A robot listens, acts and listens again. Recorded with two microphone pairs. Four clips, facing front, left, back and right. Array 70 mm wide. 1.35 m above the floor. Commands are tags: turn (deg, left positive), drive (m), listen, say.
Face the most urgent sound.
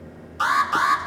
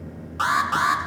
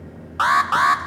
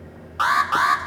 <turn deg="-160"/>
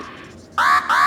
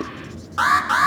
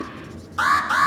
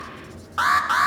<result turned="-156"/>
<say>Found it: an alarm, straight ahead, 2 to 4 m away.</say>